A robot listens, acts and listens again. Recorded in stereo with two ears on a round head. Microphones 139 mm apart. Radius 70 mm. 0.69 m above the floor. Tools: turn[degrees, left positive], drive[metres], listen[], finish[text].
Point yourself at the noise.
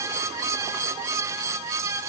Action: listen[]
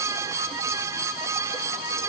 Action: listen[]
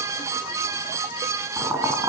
Thought: The boiling: about 20° right or 160° right.
Action: turn[-20]
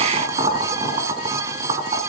Thought: So it is at 140° right.
Action: turn[-140]
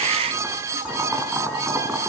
Thought: The boiling is now 10° right.
Action: turn[-10]
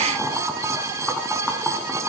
Action: finish[Found it: boiling, straight ahead.]